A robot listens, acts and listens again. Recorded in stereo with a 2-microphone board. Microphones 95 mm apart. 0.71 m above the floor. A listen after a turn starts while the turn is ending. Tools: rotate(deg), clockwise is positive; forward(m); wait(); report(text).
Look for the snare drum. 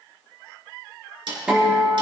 rotate(60)
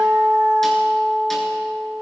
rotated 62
wait()
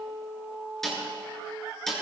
report("Found it: a snare drum, straight ahead, 2 to 4 m away.")